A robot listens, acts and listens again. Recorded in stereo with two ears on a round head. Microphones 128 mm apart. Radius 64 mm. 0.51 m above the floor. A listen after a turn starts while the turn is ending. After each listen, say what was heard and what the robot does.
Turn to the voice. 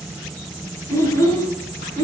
The child speaking: about 25° left or 155° left. Turn 25° left.
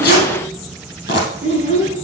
So it is at 125° left. Turn 125° left.
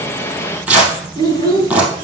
The child speaking is now 30° left. Turn 30° left.
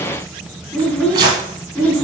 The child speaking is now 10° left. Turn 10° left.
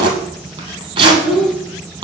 Facing the child speaking, 2 to 4 m away.